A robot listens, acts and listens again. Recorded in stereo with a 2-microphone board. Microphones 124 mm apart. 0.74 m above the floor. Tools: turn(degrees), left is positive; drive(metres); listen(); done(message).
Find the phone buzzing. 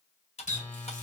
turn(degrees=20)
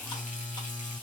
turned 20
done("Found it: a phone buzzing, straight ahead, 2 to 4 m away.")